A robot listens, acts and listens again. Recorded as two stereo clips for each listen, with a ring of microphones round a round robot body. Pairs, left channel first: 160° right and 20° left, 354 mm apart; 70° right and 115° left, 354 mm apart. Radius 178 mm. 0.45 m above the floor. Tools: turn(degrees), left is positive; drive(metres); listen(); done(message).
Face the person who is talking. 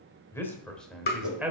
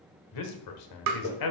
turn(degrees=-60)
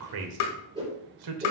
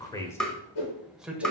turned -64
turn(degrees=25)
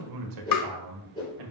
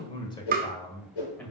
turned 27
turn(degrees=20)
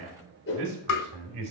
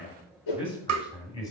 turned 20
turn(degrees=10)
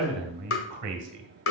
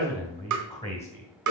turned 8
done("Facing the man speaking, 2 to 4 m away.")